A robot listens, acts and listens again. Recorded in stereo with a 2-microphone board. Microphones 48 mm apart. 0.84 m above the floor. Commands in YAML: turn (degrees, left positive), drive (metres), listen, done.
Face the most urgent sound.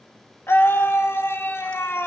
turn: 60
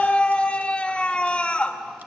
turn: 25
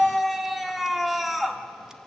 done: "Found it: a scream, straight ahead."